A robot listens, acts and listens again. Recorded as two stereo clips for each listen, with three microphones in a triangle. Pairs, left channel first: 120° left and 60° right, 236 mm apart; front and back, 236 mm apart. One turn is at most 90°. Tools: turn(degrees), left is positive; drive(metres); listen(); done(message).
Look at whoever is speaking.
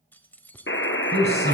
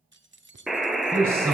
turn(degrees=-90)
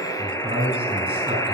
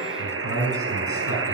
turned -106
turn(degrees=10)
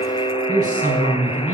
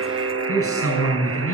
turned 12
done("Facing the man speaking, over 4 m away.")